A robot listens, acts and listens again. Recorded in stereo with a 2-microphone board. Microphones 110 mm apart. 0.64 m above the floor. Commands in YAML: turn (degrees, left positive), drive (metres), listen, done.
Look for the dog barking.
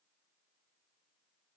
listen: true
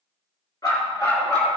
turn: 30
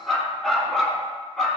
done: "Facing the dog barking, 2 to 4 m away."